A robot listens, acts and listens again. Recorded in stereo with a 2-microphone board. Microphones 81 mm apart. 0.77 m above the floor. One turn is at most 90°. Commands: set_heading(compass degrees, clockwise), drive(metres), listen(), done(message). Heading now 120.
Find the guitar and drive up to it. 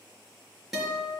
set_heading(150)
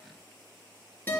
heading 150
set_heading(130)
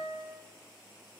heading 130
drive(1.0)
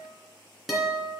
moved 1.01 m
drive(1.0)
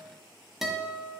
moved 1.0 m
drive(1.0)
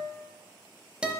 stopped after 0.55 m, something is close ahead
set_heading(145)
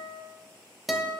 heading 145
done("I am next to the guitar.")